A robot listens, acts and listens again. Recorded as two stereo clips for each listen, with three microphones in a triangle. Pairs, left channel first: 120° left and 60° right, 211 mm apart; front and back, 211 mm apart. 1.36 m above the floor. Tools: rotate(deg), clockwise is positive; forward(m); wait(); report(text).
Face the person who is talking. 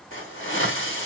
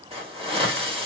wait()
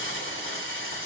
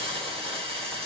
wait()
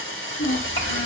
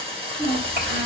rotate(-140)
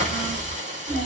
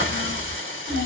report("Facing the child speaking, 2 to 4 m away.")